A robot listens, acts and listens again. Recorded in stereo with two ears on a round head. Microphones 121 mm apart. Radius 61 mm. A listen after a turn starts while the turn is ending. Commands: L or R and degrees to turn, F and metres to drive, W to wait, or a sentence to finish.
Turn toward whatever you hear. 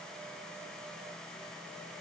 W
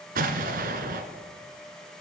R70
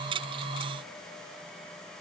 W
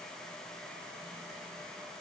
I heard an explosion, but can't make it out now. It was about straight ahead or 40° right.